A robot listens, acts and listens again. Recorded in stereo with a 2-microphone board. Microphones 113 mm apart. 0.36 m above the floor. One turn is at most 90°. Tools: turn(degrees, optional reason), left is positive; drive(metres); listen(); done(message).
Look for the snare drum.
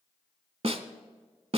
turn(degrees=-65, reason="The snare drum: about 65° right or 115° right.")
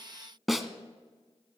done("Found it: a snare drum, straight ahead.")